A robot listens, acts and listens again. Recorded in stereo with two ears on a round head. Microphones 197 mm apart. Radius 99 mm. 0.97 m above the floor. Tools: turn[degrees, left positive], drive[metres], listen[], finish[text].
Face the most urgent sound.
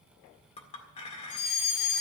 Action: turn[90]
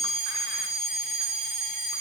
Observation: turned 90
Action: finish[Facing the fire alarm, over 4 m away.]